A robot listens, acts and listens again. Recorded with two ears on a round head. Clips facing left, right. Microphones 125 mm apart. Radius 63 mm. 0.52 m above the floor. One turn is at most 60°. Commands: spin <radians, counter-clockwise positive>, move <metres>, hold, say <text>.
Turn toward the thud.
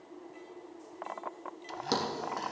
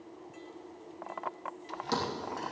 spin 1.05
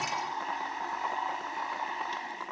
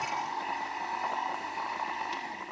hold
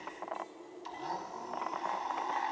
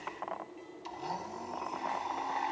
say I heard a thud, but can't make it out now. It was about straight ahead or 60° left.